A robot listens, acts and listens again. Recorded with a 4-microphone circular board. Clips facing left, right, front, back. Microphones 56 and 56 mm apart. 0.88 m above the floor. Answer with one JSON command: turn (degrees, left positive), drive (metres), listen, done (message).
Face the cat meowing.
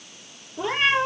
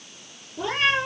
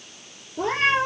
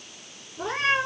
{"turn": 20}
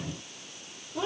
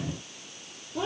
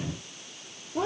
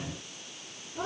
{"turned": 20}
{"done": "Found it: a cat meowing, straight ahead, over 4 m away."}